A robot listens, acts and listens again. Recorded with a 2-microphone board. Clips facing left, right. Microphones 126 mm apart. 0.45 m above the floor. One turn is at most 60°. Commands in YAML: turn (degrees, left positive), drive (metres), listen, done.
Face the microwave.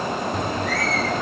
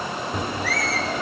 turn: -30
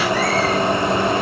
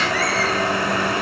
turn: 25
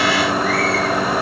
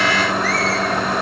done: "Facing the microwave."